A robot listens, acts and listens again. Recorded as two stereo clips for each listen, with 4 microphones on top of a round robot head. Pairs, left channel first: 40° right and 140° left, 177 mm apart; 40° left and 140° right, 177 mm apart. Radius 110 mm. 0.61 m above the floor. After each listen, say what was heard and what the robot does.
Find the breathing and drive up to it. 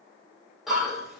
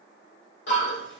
The breathing: 50° left. Turn 50° left.
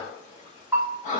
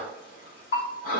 Drive 1.0 m forward.
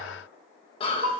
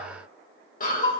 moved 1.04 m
The breathing is now 10° left. Turn 10° left.
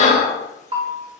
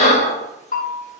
Drive 1.0 m forward.
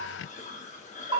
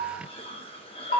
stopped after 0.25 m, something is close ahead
Keep listening.
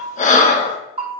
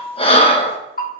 The breathing is now 10° right. Turn 10° right.
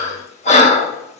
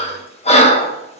I am next to the breathing.